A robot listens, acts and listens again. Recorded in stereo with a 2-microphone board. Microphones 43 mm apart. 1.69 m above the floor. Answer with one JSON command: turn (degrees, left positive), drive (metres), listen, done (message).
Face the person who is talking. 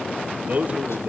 {"turn": -35}
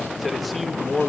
{"done": "Facing the man speaking, 2 to 4 m away."}